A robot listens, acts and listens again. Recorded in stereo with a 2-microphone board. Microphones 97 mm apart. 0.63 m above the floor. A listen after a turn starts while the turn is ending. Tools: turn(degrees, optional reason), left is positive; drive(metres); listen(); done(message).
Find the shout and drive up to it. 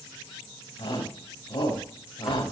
turn(degrees=60, reason="The shout: about 60° left or 120° left.")
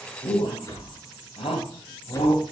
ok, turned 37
turn(degrees=80, reason="So it is at 80° left.")
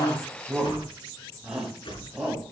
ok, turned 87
drive(metres=1.0)
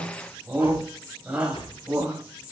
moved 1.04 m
turn(degrees=-10, reason="The shout is now 10° right.")
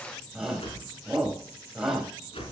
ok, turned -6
drive(metres=1.0)
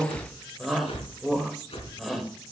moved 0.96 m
drive(metres=1.0)
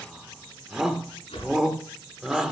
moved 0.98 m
drive(metres=1.0)
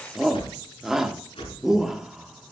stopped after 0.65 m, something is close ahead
done("I am next to the shout.")